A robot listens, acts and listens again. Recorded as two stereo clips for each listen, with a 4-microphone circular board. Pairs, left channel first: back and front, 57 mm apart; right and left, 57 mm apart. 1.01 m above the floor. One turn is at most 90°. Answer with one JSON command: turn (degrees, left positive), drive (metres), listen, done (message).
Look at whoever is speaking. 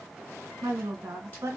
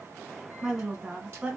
{"turn": 20}
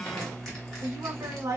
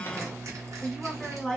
{"turn": -10}
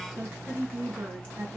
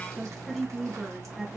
{"done": "Facing the woman speaking, 1 to 2 m away."}